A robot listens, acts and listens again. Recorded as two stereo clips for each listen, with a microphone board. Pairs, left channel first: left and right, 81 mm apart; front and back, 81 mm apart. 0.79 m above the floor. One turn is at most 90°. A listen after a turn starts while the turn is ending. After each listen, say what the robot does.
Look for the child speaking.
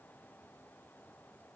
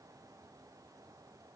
Keep listening.
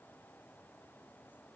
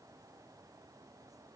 Keep listening.
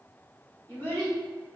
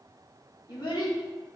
Turn 25° left.
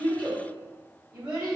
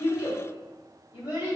Turn 15° right.
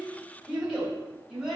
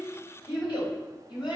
Facing the child speaking, 2 to 4 m away.